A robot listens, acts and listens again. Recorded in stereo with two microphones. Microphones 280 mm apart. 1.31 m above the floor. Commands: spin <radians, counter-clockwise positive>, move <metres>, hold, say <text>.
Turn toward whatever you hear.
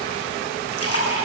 spin 1.05
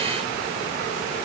hold
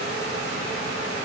say I heard a splash, but can't make it out now. It was about straight ahead or 60° left.